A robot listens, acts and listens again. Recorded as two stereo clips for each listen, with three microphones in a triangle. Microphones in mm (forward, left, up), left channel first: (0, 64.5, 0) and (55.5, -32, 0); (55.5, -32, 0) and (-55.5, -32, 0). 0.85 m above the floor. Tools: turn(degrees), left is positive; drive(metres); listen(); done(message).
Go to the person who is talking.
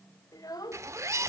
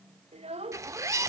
turn(degrees=175)
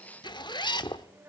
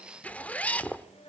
turn(degrees=10)
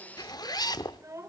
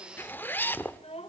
drive(metres=1.0)
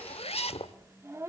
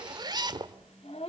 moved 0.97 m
drive(metres=1.0)
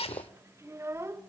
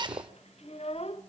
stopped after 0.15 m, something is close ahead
done("Arrived at the child speaking, straight ahead.")